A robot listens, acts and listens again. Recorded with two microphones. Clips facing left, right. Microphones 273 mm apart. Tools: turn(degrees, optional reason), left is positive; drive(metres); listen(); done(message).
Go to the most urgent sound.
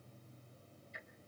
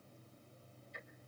listen()
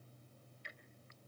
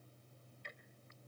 listen()
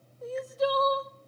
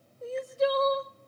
turn(degrees=-30, reason="The crying: about 30° right or 150° right.")
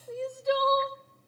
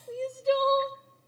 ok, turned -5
turn(degrees=-35, reason="The crying: about 35° right or 145° right.")
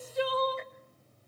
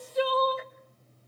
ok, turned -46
turn(degrees=-95, reason="So it is at 95° right.")
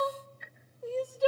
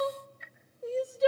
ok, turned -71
turn(degrees=-25, reason="The crying is now 25° right.")
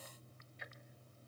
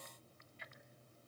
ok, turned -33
turn(degrees=10, reason="Nothing new. It was at 10° left.")
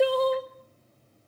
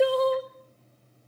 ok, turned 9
drive(metres=1.0)
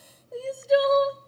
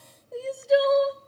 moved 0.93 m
drive(metres=1.0)
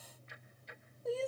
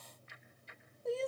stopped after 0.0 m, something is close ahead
done("Arrived at the crying, straight ahead.")